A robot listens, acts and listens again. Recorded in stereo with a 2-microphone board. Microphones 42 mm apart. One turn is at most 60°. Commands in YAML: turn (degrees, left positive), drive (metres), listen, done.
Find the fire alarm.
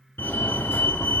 turn: 60
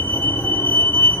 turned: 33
turn: 60
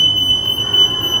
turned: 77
done: "Facing the fire alarm, 2 to 4 m away."